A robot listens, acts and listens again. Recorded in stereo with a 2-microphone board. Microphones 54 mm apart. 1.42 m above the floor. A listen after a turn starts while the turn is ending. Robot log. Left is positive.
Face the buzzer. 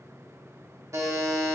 note: The buzzer: about 65° right or 115° right.
cmd yaw -65
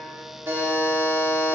note: So it is at 45° right.
cmd yaw -45
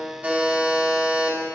note: The buzzer is now 15° right.
cmd yaw -15
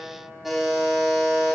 end: Found it: a buzzer, straight ahead.